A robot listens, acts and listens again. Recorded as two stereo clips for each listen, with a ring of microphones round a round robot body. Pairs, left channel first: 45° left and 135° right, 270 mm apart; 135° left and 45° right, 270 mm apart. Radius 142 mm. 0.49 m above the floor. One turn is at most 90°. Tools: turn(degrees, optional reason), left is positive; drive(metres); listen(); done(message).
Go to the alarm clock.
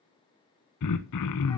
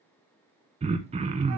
listen()
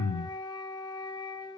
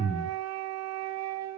listen()
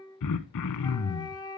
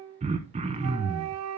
done("I can't make out an alarm clock, only a flute and throat clearing.")